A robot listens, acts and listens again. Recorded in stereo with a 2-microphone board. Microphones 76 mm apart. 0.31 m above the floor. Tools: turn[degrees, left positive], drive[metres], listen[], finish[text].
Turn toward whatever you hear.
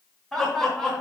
Action: turn[30]
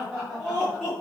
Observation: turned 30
Action: turn[30]
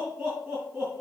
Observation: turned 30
Action: finish[Found it: laughter, straight ahead, 2 to 4 m away.]